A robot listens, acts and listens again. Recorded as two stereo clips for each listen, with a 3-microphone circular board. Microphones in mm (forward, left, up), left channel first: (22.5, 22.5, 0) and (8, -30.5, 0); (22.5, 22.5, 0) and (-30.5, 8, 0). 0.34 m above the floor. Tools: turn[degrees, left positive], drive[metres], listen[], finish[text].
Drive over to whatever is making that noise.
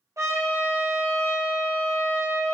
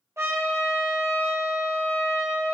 Thought: The trumpet: 125° right.
Action: turn[-125]
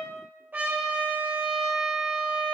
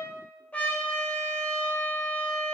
Thought: The trumpet is now 45° right.
Action: turn[-45]
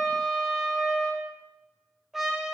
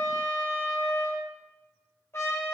Thought: The trumpet is now 20° right.
Action: turn[-20]
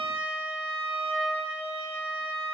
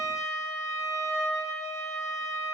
Action: drive[1.0]
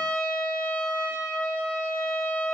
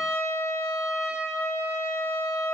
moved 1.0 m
Thought: The trumpet is now 10° left.
Action: turn[10]
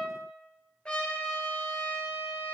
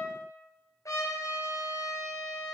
Thought: The trumpet is now 10° left.
Action: turn[10]
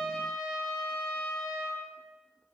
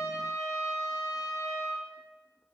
Action: drive[1.0]
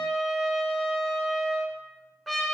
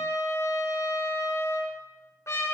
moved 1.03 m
Thought: The trumpet is now 10° right.
Action: turn[-10]
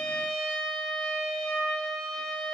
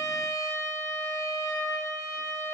Action: drive[1.0]
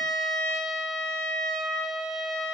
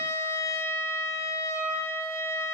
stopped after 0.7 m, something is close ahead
Action: finish[Arrived at the trumpet, straight ahead.]